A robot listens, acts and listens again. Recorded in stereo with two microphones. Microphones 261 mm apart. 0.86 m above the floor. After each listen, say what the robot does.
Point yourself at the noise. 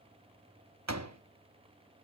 Turn 90° right.
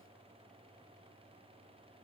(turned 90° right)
I heard a door slam from this way, but can't make it out now.